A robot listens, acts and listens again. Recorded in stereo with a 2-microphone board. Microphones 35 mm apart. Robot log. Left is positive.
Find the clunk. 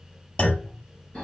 note: The clunk: about 40° left or 140° left.
cmd yaw +40
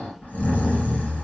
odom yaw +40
cmd idle
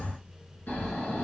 end: I heard a clunk, but can't make it out now. It was about straight ahead or 100° left.